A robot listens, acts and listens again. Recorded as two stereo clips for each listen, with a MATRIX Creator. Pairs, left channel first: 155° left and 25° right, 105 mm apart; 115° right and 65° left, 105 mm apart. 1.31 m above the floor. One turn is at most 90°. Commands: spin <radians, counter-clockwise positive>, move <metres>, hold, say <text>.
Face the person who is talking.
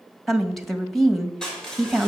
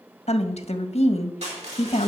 spin -1.57
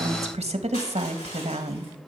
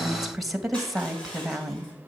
spin -0.35
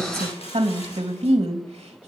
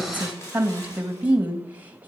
say Found it: a woman speaking, straight ahead, 1 to 2 m away.